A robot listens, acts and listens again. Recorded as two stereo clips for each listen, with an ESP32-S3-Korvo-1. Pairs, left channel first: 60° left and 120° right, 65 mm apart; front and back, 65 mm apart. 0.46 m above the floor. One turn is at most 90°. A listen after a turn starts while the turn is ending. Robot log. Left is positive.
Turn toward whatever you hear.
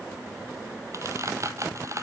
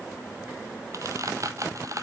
note: The squeak: 155° right.
cmd yaw -90
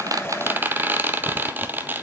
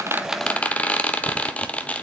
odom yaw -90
note: The squeak is now 65° right.
cmd yaw -65
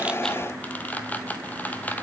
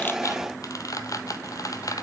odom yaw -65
end: Facing the squeak.